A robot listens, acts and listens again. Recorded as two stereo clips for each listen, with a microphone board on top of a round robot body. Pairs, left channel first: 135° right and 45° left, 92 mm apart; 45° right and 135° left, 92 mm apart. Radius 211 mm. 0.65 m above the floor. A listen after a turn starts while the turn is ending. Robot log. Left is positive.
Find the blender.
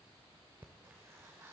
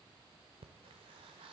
cmd idle
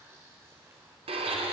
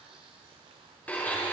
note: The blender: 30° left.
cmd yaw +30
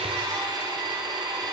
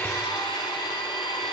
end: Facing the blender, under 1 m away.